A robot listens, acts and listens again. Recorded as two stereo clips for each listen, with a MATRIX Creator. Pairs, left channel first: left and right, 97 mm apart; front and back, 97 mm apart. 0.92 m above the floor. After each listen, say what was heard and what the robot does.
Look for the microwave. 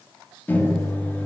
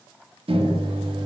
The microwave: 160° left. Turn 160° left.
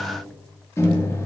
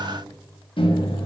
The microwave is now 30° left. Turn 30° left.
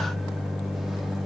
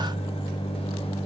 Facing the microwave.